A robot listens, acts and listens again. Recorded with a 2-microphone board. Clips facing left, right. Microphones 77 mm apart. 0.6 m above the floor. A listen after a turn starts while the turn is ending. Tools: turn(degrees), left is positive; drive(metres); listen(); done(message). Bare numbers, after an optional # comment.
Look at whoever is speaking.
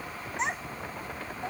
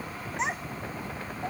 turn(30)
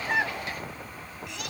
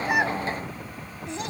# So it is at 30° right.
turn(-30)
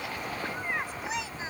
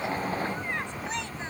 done("Found it: a child speaking, straight ahead.")